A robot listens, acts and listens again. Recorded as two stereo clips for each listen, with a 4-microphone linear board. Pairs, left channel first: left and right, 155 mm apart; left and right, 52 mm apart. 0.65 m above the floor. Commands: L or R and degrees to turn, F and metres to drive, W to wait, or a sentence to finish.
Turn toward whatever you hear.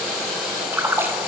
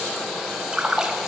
R30
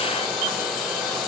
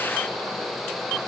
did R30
W
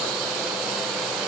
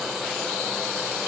I heard a splash, but can't make it out now. It was about 15° left or 135° right.